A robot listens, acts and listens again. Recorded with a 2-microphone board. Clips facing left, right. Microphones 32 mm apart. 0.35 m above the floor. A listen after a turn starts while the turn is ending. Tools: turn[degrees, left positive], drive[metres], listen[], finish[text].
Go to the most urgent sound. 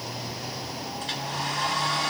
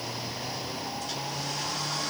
Action: listen[]
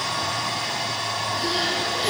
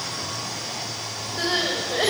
Action: turn[-90]
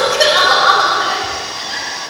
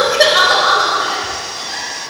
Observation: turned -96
Action: drive[1.0]
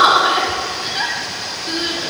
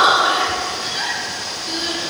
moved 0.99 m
Thought: The crying is now 10° left.
Action: turn[10]
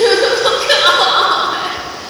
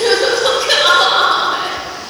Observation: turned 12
Action: drive[1.0]
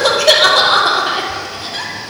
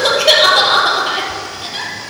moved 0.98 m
Thought: The crying is now 10° right.
Action: turn[-10]
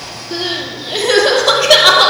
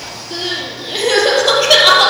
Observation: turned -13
Action: drive[1.0]
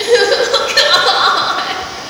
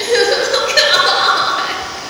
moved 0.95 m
Action: drive[1.0]
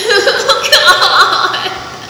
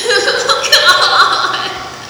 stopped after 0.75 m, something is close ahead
Thought: The crying is now 10° left.
Action: turn[10]
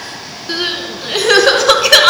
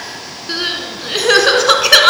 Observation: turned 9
Action: finish[I am next to the crying.]